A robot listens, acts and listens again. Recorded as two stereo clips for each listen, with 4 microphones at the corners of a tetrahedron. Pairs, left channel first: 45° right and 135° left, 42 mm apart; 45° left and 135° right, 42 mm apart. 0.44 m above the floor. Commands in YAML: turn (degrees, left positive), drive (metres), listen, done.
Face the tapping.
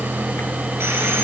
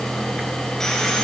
listen: true
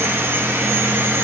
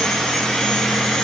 listen: true
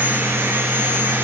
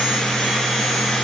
done: "I can't make out tapping."